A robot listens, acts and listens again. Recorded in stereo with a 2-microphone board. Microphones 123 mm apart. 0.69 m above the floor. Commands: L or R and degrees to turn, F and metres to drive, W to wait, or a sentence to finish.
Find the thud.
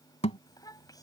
L65
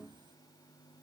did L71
W
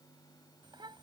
I heard a thud, but can't make it out now. It was about 10° right or 45° left.